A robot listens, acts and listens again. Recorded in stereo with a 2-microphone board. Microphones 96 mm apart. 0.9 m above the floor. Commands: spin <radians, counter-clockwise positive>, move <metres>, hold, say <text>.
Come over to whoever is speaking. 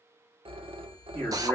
spin 0.26
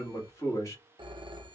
spin 2.53
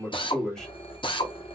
spin 0.17
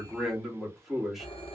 move 1.0
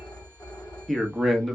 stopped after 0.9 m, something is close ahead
say I am next to the man speaking.